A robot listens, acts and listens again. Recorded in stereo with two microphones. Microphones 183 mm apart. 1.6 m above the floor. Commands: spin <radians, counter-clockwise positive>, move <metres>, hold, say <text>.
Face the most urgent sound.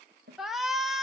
spin 0.52
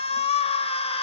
spin 2.62
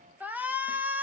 spin -0.17
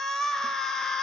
say Facing the shout.